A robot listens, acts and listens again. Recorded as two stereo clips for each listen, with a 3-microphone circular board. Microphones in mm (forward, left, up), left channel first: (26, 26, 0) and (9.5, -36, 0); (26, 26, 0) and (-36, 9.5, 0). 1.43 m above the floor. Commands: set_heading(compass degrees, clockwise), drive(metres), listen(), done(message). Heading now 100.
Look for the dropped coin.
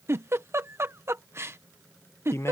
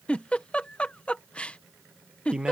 listen()
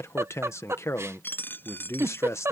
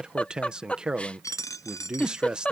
set_heading(75)
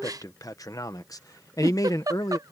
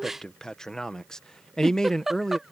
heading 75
done("Facing where the dropped coin came from. I can't hear it now.")